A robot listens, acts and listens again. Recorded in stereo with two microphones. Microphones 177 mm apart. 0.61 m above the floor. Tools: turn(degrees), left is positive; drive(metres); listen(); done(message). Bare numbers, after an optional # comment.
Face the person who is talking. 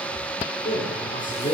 # The man speaking: about 45° left or 135° left.
turn(45)
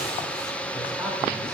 listen()
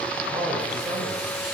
# So it is at 15° right.
turn(-15)
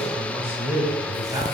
# The man speaking is now 15° right.
turn(-15)
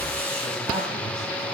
listen()
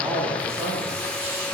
done("Found it: a man speaking, straight ahead, 2 to 4 m away.")